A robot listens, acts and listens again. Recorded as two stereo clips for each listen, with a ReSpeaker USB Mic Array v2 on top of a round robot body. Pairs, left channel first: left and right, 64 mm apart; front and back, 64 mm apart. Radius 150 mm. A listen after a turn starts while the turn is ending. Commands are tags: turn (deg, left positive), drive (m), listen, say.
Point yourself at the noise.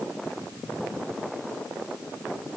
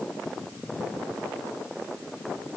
<listen/>
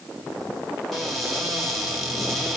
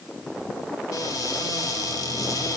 <say>Facing the cupboard door.</say>